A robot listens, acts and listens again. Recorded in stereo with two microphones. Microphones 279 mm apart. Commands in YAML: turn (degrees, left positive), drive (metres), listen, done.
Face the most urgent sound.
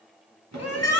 turn: 60
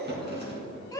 turn: 15
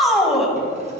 done: "Facing the shout, 1 to 2 m away."